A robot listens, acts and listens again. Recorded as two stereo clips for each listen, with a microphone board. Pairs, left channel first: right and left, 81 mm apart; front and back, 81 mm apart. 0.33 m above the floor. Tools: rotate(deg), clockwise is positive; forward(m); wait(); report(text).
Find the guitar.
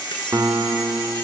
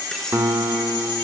rotate(-135)
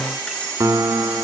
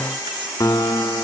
rotate(-50)
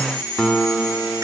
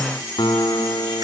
report("Found it: a guitar, straight ahead, 2 to 4 m away.")